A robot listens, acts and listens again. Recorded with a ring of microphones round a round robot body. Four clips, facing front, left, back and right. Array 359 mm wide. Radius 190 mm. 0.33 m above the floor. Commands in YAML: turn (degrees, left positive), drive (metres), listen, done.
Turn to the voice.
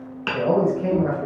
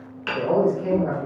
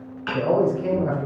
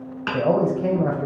turn: -70
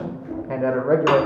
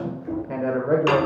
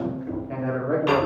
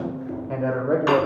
done: "Facing the man speaking."